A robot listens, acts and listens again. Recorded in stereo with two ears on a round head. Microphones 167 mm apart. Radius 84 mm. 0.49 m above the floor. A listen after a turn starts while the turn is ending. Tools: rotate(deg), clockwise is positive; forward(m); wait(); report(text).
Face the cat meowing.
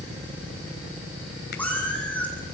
rotate(-30)
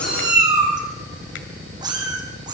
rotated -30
rotate(20)
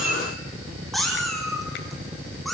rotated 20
report("Found it: a cat meowing, straight ahead.")